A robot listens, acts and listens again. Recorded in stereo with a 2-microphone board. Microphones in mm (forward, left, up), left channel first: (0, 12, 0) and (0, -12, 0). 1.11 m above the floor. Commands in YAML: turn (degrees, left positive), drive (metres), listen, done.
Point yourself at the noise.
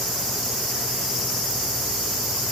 listen: true
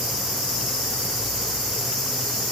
listen: true
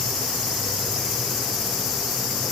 done: "I can't make out anything to turn to."